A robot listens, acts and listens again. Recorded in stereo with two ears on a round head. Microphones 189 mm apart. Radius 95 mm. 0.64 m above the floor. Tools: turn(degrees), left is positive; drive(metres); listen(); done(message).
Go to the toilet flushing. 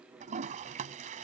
turn(degrees=-35)
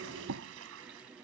turn(degrees=-105)
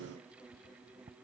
turn(degrees=-30)
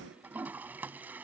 turn(degrees=-10)
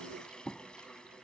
drive(metres=1.0)
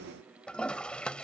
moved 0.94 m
drive(metres=1.0)
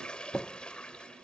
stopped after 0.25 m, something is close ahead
done("I am next to the toilet flushing.")